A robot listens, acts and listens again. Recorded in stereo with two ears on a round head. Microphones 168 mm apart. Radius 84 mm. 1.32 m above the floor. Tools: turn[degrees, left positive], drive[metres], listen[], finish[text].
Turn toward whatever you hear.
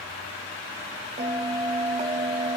Thought: The bell: about 35° right or 145° right.
Action: turn[-35]
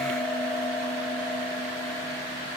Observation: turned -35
Action: finish[Found it: a bell, straight ahead.]